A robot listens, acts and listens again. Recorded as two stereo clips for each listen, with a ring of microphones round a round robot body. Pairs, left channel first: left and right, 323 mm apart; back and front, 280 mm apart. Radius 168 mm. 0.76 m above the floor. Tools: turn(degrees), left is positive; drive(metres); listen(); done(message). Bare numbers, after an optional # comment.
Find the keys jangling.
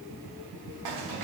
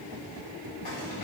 # The keys jangling: 115° right.
turn(-115)
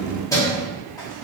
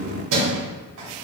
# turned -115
# The keys jangling is now 10° left.
turn(10)
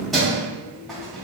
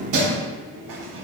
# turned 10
done("Found it: keys jangling, straight ahead.")